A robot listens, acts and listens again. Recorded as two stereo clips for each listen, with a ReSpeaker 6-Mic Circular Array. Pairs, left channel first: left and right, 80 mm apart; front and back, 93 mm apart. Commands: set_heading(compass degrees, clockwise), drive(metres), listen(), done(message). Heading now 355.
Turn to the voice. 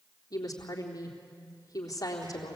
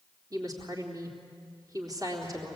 set_heading(225)
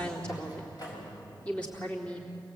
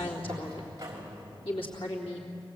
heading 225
set_heading(210)
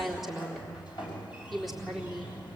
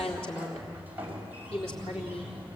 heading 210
done("Facing the woman speaking.")